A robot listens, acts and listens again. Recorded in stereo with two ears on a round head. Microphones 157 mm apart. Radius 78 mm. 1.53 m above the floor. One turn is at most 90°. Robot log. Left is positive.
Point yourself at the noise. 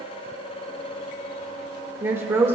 cmd yaw -30
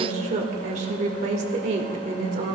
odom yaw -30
note: So it is at 135° right.
cmd yaw -90
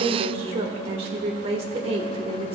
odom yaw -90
note: The woman speaking is now 35° right.
cmd yaw -35
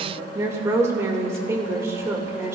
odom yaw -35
note: The woman speaking is now 15° right.
cmd yaw -15
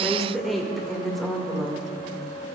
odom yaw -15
end: Facing the woman speaking, 1 to 2 m away.